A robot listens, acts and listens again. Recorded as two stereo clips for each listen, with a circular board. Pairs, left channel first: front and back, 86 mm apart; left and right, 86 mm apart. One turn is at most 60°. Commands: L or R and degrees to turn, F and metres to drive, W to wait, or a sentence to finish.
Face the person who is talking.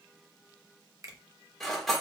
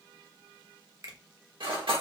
W
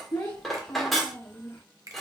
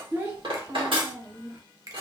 R35
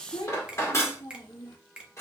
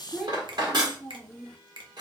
Found it: a child speaking, straight ahead.